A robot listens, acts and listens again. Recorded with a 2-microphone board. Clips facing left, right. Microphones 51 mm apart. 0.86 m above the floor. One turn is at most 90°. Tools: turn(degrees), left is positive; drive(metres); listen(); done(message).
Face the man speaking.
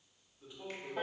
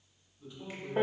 turn(degrees=15)
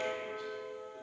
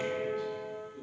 listen()
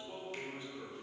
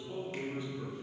turn(degrees=90)
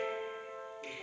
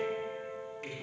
turn(degrees=85)
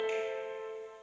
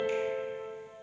listen()
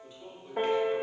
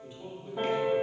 turn(degrees=-30)
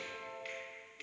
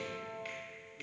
listen()
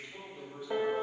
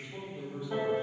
turn(degrees=-10)
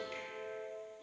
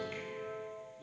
listen()
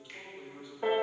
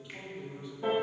done("Found it: a man speaking, straight ahead, 1 to 2 m away.")